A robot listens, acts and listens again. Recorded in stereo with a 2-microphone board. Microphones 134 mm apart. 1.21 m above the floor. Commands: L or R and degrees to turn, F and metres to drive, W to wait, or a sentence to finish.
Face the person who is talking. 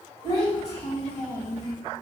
L50
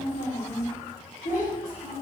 L65
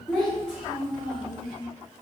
Found it: a child speaking, straight ahead.